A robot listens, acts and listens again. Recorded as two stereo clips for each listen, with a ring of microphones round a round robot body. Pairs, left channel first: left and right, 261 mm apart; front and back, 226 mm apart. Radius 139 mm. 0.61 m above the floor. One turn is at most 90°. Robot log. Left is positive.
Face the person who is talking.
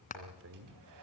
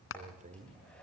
note: The man speaking: 120° right.
cmd yaw -90
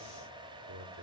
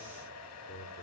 note: The man speaking is now 50° right.
cmd yaw -50
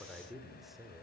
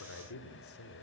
end: Found it: a man speaking, straight ahead, 2 to 4 m away.